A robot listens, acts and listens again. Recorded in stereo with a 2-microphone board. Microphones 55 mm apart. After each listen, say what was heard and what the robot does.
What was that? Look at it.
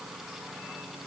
Keep listening.
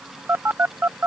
The phone buzzing: about 40° right or 140° right. Turn 40° right.
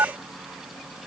So it is at 90° right. Turn 90° right.
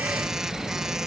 The phone buzzing is now 10° right. Turn 10° right.
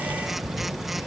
Facing the phone buzzing.